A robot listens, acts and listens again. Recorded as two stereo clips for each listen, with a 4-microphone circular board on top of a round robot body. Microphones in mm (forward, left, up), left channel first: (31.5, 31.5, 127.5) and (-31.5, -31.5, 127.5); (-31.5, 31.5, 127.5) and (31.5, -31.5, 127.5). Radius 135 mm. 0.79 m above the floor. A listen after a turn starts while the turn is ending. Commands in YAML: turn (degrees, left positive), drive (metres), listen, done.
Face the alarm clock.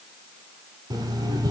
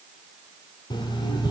turn: 175
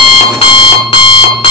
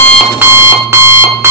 turn: 20
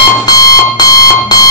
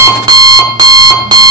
done: "Facing the alarm clock, 1 to 2 m away."